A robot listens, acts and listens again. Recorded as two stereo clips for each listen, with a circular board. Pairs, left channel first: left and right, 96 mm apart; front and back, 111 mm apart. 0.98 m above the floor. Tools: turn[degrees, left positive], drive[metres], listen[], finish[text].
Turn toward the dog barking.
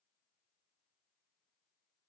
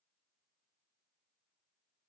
Action: listen[]
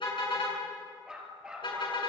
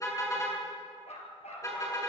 Thought: The dog barking: 10° right.
Action: turn[-10]
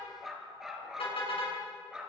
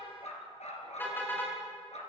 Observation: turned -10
Thought: The dog barking is now 10° right.
Action: turn[-10]
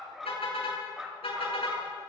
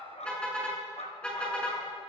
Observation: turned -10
Action: finish[Found it: a dog barking, straight ahead, 2 to 4 m away.]